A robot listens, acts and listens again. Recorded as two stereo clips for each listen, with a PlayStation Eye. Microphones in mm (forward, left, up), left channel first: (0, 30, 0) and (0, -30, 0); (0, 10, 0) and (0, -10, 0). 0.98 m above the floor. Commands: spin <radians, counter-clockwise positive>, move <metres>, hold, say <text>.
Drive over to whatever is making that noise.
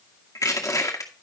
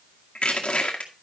spin 1.22
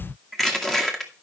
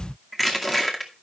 move 1.0
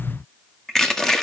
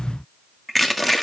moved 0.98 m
spin 0.17
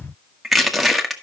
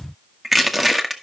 move 1.0
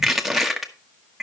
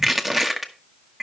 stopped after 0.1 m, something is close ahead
say I am next to the crushing.